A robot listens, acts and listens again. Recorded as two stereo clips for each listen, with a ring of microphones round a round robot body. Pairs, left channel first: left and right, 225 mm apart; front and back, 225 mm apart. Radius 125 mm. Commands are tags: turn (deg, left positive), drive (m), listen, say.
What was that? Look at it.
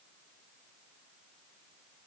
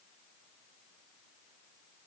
<listen/>
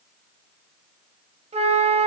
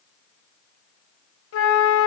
<turn deg="-25"/>
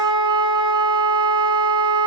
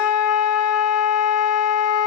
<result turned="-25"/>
<turn deg="-20"/>
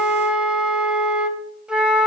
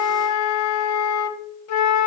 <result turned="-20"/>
<say>Found it: a flute, straight ahead.</say>